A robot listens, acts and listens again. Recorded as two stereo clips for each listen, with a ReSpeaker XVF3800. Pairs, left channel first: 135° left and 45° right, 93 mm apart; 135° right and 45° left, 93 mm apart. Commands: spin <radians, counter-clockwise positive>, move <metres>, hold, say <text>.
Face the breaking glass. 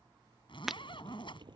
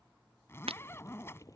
spin 0.79
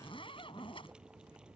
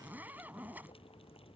say Facing where the breaking glass came from. I can't hear it now.